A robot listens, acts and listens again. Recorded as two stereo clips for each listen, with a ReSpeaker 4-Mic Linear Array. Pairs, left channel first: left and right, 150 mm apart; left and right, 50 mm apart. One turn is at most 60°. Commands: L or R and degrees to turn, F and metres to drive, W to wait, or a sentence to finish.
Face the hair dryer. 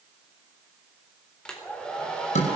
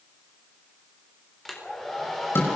L30
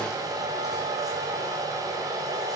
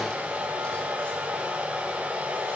R25
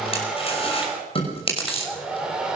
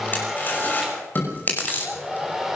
Facing the hair dryer, over 4 m away.